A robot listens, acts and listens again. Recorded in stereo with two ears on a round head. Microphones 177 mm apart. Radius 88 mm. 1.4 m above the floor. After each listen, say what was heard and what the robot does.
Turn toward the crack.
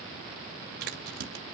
The crack: about 50° right or 130° right. Turn 50° right.
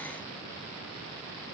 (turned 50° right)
Keep listening.
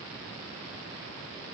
I heard a crack, but can't make it out now. It was about straight ahead or 80° right.